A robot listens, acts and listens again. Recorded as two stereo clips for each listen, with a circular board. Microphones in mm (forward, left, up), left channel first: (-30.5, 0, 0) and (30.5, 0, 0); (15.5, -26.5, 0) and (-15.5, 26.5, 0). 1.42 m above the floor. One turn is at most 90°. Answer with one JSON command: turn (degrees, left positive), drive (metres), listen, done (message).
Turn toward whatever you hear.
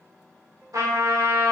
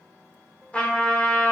{"turn": 10}
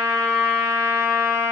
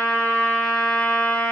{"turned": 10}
{"done": "Found it: a trumpet, straight ahead, 2 to 4 m away."}